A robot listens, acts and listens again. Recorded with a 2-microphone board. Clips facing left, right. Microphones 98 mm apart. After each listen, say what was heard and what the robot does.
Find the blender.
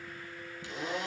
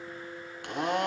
The blender: about 65° right or 115° right. Turn 65° right.
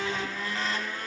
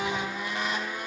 So it is at 20° right. Turn 20° right.
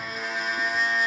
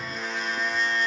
Found it: a blender, straight ahead, 1 to 2 m away.